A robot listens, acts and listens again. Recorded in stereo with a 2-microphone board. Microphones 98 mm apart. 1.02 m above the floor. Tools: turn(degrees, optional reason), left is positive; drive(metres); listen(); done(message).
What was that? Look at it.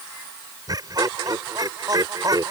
turn(degrees=-40, reason="The laughter: about 40° right or 140° right.")
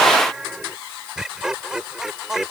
done("Found it: laughter, straight ahead.")